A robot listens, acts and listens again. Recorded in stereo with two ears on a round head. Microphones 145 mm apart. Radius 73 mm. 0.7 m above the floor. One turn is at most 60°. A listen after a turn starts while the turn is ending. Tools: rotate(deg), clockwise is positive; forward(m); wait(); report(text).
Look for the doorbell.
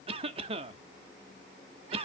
wait()
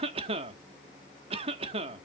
wait()
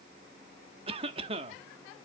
report("I can't make out a doorbell, only a cough.")